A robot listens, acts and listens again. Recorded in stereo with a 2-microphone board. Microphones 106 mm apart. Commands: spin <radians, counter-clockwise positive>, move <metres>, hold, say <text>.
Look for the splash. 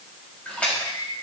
spin 0.52
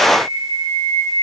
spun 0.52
hold
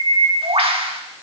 say I heard a splash, but can't make it out now. It was about 15° right or 135° left.